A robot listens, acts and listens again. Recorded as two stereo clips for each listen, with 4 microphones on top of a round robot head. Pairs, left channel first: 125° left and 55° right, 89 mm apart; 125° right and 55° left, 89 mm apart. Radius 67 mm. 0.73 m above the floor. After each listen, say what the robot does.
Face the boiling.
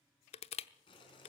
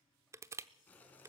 Turn 160° left.
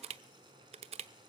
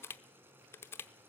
Turn 15° right.
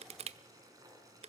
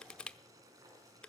Facing the boiling.